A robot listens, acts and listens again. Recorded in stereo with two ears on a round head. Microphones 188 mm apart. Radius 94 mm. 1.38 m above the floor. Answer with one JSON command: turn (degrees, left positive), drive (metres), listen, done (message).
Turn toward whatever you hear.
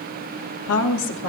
{"turn": 65}
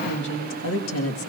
{"turn": 70}
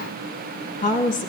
{"turn": 40}
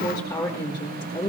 {"turn": 20}
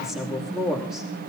{"done": "Facing the woman speaking, 2 to 4 m away."}